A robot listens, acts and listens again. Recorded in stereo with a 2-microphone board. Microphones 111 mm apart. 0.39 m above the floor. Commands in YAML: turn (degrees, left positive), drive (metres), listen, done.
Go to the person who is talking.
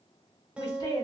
turn: 45
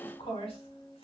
turn: 80
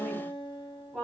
turn: -10
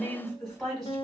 drive: 1.0
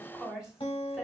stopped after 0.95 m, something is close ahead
done: "Arrived at the woman speaking, straight ahead."